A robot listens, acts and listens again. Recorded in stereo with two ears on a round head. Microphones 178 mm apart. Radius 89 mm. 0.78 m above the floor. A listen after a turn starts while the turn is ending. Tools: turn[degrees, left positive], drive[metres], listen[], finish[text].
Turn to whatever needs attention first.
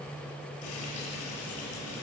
Action: listen[]
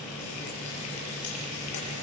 Action: listen[]
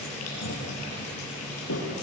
Action: finish[I can't make out anything urgent, only frying.]